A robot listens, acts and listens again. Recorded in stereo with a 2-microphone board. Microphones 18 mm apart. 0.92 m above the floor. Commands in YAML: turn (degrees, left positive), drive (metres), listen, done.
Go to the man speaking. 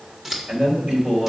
turn: -65
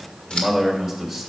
drive: 1.0
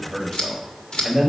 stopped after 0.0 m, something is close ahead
turn: -10
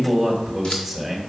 done: "Blocked. The man speaking is further on, straight ahead."